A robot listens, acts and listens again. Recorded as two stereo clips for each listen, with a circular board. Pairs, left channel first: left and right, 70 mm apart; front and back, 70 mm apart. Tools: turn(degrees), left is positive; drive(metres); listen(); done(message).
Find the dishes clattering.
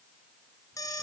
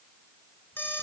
listen()
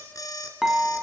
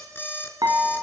turn(degrees=-175)
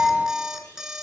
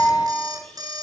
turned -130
turn(degrees=-45)
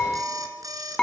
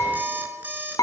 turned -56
turn(degrees=10)
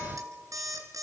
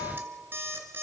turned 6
listen()
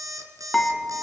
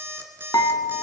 done("Facing the dishes clattering.")